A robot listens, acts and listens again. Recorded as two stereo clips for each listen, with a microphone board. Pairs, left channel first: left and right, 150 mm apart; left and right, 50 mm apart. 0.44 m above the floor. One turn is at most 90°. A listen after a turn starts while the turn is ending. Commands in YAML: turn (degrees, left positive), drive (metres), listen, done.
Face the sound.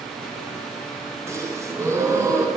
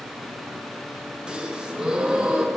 turn: -20
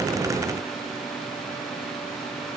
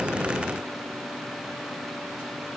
listen: true
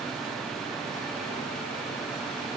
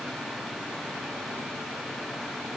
done: "I heard a gasp, but can't make it out now. It was about straight ahead or 140° right."